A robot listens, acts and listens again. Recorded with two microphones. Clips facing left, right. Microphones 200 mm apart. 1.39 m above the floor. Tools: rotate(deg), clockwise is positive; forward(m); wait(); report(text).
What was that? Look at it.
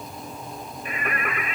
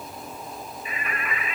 rotate(-60)
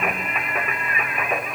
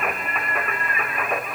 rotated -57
report("Found it: singing, straight ahead.")